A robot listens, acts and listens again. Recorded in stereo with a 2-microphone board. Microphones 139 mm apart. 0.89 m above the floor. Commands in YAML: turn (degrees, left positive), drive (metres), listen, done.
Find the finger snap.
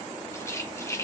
listen: true
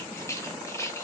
listen: true
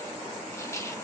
done: "I can't make out a finger snap to turn to."